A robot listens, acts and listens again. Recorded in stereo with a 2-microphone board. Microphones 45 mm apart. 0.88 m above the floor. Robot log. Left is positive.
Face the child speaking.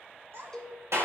note: The child speaking: about 60° right or 120° right.
cmd yaw -60
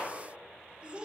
note: So it is at 25° right.
cmd yaw -25
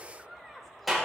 end: Facing the child speaking, 2 to 4 m away.